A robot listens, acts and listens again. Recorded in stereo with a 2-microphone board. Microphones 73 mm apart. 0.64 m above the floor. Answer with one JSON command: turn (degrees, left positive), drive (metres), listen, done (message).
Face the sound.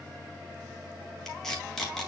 {"turn": 30}
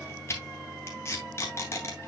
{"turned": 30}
{"turn": 145}
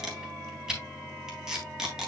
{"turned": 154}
{"turn": -10}
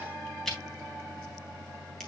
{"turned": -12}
{"done": "Found it: tape being pulled, straight ahead, 2 to 4 m away."}